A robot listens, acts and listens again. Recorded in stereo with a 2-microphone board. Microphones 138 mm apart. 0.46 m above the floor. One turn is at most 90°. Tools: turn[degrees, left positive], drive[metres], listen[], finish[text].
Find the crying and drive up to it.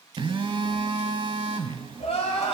Thought: The crying: about 45° left or 135° left.
Action: turn[45]
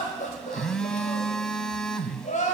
Thought: So it is at 85° left.
Action: turn[85]
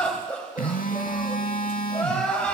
Thought: The crying is now 10° left.
Action: turn[10]
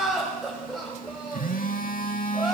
Action: drive[1.0]
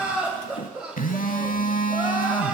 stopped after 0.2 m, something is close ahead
Thought: The crying is now 10° right.
Action: turn[-10]
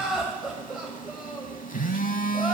Action: finish[Blocked. The crying is further on, straight ahead.]